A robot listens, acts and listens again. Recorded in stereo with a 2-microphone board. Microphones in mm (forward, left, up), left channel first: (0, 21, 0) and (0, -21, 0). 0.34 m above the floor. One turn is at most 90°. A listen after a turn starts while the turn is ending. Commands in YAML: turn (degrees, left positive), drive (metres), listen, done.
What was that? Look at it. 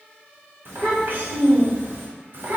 turn: -55
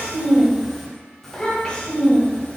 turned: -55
turn: 30
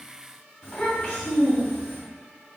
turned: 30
turn: 15
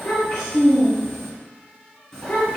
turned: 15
turn: 10
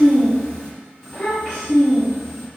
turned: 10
done: "Facing the child speaking."